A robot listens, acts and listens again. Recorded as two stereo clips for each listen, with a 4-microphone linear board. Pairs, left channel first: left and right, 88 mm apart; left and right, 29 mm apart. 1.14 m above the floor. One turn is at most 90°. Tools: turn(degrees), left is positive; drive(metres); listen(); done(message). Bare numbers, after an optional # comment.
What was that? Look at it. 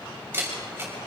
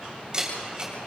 # The camera shutter: about 20° right or 160° right.
turn(-20)
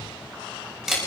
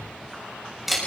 done("Found it: a camera shutter, straight ahead, over 4 m away.")